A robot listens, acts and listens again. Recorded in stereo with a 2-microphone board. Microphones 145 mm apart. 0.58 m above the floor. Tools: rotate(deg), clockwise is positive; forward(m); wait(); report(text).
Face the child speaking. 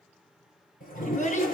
rotate(-60)
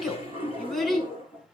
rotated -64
report("Facing the child speaking.")